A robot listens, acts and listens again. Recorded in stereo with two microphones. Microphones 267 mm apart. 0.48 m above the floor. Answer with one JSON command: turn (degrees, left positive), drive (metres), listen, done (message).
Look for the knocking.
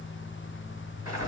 {"listen": true}
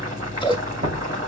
{"turn": -45}
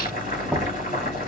{"done": "Found it: knocking, straight ahead, 2 to 4 m away."}